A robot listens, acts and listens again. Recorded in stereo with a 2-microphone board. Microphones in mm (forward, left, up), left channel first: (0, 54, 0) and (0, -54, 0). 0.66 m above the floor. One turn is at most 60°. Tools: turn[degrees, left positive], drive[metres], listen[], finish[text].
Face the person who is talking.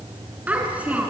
Action: turn[-30]
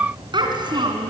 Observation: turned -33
Thought: So it is at 130° right.
Action: turn[-60]
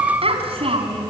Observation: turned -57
Thought: The child speaking is now 70° right.
Action: turn[-60]
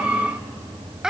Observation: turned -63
Action: finish[Facing the child speaking, 1 to 2 m away.]